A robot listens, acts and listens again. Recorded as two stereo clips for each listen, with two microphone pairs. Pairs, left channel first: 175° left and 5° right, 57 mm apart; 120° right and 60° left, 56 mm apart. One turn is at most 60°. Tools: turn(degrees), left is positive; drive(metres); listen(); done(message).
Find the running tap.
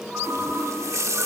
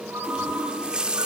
turn(degrees=-10)
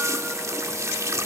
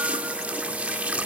done("Facing the running tap.")